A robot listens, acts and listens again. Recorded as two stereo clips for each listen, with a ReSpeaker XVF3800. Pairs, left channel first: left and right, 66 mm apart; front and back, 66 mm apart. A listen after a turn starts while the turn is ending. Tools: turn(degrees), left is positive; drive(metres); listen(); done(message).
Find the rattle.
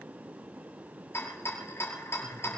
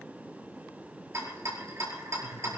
turn(degrees=140)
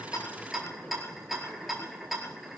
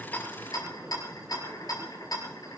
done("Found it: a rattle, straight ahead.")